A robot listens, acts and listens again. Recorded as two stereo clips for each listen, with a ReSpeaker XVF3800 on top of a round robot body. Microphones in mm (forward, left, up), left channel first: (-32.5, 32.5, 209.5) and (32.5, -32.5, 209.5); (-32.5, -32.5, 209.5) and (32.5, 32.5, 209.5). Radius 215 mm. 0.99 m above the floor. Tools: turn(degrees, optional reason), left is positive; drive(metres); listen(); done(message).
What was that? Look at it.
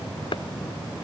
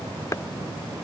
turn(degrees=165, reason="The chopping: 165° left.")
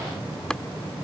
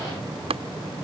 turn(degrees=55, reason="The chopping is now 55° left.")
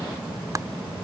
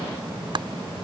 turn(degrees=10, reason="The chopping is now 10° left.")
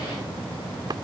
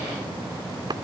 done("Found it: chopping, straight ahead.")